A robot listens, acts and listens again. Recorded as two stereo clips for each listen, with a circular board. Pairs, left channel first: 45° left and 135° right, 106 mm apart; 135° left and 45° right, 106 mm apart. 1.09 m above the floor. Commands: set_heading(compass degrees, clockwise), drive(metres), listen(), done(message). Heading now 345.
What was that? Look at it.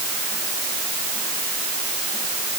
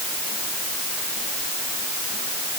listen()
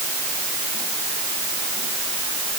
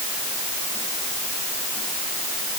listen()
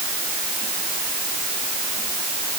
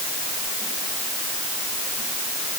done("I can't make out anything to turn to.")